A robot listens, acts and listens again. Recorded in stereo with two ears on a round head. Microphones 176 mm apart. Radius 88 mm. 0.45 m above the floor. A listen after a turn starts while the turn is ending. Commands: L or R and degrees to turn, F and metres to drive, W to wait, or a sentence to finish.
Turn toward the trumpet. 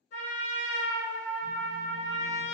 L60
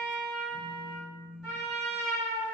Facing the trumpet, under 1 m away.